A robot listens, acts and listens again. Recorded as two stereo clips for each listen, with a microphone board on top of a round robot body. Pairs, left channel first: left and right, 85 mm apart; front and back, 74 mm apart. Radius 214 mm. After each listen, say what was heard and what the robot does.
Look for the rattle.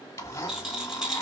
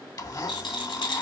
Facing the rattle.